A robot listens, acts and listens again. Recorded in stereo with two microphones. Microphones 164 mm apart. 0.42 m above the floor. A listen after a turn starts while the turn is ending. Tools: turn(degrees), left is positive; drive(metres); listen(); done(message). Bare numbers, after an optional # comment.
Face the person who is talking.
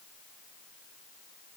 listen()
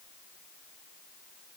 listen()
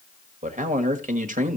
# The man speaking: about 50° right or 130° right.
turn(-50)
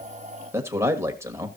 # So it is at 20° right.
turn(-20)
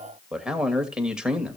done("Facing the man speaking, 1 to 2 m away.")